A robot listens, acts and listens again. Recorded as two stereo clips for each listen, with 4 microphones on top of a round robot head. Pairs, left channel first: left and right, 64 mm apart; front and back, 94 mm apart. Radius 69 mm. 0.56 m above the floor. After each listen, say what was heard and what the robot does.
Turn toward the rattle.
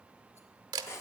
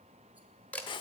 Keep listening.
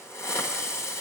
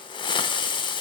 Keep listening.
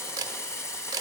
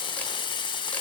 I can't make out a rattle, only a hiss and a camera shutter.